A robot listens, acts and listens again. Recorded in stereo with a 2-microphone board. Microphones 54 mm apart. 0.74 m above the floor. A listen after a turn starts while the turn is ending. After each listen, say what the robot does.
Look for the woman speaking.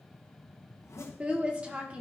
Turn 20° right.
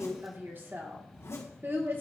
Turn 135° right.
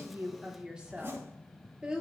Turn 20° right.
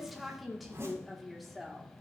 Found it: a woman speaking, straight ahead.